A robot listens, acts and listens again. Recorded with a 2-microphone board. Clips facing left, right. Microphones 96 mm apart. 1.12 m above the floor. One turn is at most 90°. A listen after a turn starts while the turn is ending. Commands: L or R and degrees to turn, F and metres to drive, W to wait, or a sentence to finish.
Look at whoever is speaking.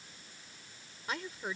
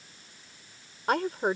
R65
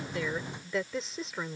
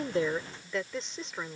Facing the woman speaking.